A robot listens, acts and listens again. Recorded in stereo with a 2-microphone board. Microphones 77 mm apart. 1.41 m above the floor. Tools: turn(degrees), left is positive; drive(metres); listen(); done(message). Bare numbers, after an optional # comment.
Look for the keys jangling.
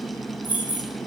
# The keys jangling: about 20° right or 160° right.
turn(-20)
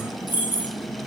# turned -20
# The keys jangling: about 25° right or 155° right.
turn(-25)
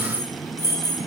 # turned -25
# The keys jangling: about 35° right or 145° right.
turn(-35)
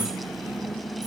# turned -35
listen()
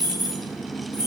# So it is at 125° right.
turn(-125)
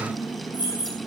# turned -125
# The keys jangling is now 20° right.
turn(-20)
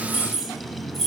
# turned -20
done("Facing the keys jangling.")